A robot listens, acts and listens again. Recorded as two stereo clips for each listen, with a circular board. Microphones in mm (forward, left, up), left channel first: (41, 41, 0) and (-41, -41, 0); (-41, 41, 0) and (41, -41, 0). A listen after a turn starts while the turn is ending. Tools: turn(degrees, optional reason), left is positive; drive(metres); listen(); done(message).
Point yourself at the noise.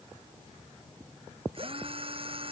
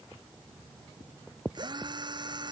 turn(degrees=-95, reason="The drill: 95° right.")
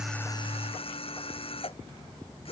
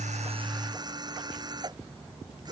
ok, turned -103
turn(degrees=10, reason="The drill is now 10° left.")
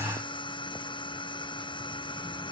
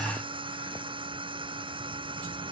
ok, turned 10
done("Facing the drill.")